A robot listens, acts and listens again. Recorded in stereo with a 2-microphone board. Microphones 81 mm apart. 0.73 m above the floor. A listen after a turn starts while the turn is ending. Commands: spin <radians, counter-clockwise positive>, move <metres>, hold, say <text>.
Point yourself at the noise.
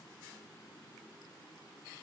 hold
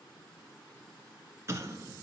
spin -0.61
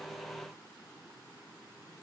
hold
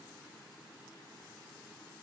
say I heard an explosion, but can't make it out now. It was about straight ahead or 110° right.